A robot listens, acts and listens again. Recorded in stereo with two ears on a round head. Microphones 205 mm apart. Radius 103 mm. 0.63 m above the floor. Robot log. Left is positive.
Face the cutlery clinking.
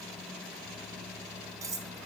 cmd yaw -30
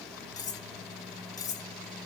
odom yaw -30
note: So it is at 15° left.
cmd yaw +15
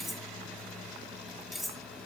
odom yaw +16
end: Found it: cutlery clinking, straight ahead, under 1 m away.